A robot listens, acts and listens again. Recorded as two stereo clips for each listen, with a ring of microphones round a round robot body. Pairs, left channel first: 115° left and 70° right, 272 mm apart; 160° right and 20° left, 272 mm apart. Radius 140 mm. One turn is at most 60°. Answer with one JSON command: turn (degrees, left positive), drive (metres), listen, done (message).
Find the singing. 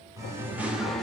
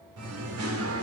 {"turn": 25}
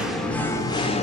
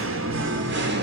{"turn": 55}
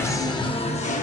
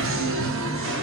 {"turn": 55}
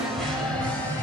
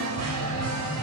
{"turn": 30}
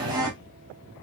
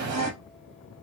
{"turn": 10}
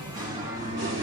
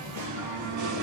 {"turn": 10}
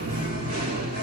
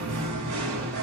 {"done": "Found it: singing, straight ahead, 2 to 4 m away."}